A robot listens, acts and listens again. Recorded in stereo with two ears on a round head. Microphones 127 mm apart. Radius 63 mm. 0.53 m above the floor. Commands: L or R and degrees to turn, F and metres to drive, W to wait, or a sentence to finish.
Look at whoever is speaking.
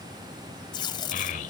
L60
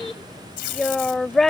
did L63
Facing the child speaking.